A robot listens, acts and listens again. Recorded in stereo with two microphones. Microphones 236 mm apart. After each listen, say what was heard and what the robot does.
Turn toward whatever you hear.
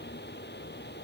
Keep listening.
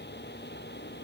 Keep listening.
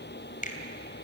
The finger snap: about 35° left or 145° left. Turn 35° left.
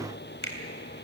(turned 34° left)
So it is at 110° left. Turn 110° left.
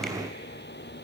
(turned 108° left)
Keep listening.
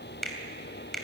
Found it: a finger snap, straight ahead.